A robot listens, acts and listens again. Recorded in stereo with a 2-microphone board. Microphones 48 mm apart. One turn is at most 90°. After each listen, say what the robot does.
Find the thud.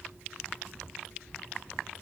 Keep listening.
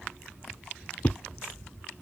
Turn 30° left.
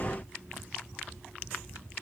Keep listening.
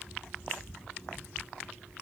I heard a thud, but can't make it out now. It was about straight ahead or 120° left.